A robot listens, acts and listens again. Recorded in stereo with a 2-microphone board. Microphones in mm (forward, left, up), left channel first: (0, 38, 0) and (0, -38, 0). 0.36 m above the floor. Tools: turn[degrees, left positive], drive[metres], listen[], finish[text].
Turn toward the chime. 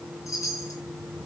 Thought: The chime: about 45° left or 135° left.
Action: turn[45]
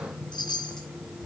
Thought: So it is at 90° left.
Action: turn[90]
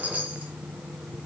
Thought: The chime is now 20° right.
Action: turn[-20]
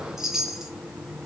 Action: finish[Facing the chime.]